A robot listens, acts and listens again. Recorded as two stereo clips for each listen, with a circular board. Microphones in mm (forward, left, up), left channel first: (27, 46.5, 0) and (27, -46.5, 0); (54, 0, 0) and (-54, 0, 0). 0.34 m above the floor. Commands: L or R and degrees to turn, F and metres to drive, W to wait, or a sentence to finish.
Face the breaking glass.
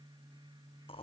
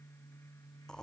W
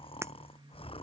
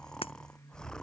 R30
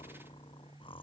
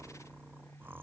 I heard breaking glass from this way, but can't make it out now.